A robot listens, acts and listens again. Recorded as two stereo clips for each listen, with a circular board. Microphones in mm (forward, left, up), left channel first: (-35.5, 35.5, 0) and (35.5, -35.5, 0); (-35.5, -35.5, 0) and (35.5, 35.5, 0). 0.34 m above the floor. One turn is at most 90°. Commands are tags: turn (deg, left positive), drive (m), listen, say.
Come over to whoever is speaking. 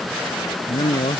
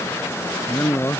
<turn deg="90"/>
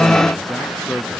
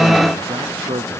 <turn deg="50"/>
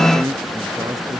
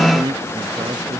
<turn deg="10"/>
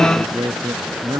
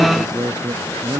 <drive m="1.0"/>
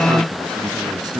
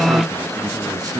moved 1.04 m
<drive m="1.0"/>
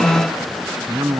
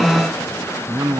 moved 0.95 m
<drive m="1.0"/>
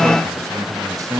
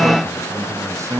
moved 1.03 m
<drive m="1.0"/>
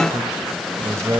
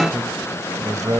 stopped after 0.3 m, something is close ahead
<say>I am next to the man speaking.</say>